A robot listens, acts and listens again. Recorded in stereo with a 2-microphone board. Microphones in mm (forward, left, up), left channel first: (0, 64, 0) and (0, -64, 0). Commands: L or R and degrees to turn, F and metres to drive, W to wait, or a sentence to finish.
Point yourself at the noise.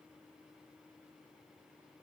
W
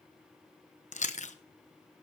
L70
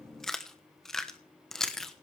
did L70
Facing the chewing, 1 to 2 m away.